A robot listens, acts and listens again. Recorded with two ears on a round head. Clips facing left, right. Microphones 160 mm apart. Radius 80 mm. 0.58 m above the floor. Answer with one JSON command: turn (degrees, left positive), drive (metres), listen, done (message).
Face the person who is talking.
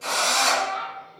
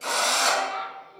{"turn": -70}
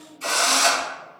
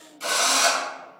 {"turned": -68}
{"listen": true}
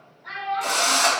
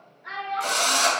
{"turn": -20}
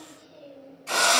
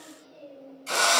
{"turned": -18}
{"done": "Found it: a child speaking, straight ahead, 1 to 2 m away."}